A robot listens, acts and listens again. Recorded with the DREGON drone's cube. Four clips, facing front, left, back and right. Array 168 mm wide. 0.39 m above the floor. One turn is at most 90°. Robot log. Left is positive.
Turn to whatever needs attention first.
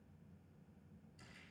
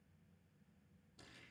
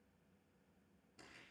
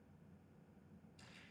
cmd idle
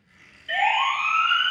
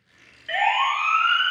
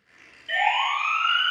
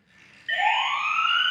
note: The siren: 85° left.
cmd yaw +85
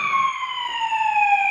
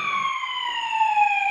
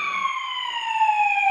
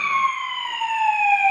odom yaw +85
note: The siren is now 35° right.
cmd yaw -35
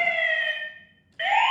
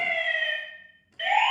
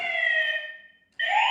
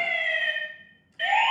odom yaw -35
end: Found it: a siren, straight ahead, over 4 m away.